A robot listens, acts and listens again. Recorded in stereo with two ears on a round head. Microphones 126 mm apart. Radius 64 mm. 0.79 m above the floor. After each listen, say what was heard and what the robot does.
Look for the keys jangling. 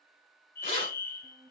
The keys jangling: about 45° left or 135° left. Turn 45° left.
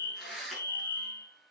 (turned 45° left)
Facing the keys jangling, over 4 m away.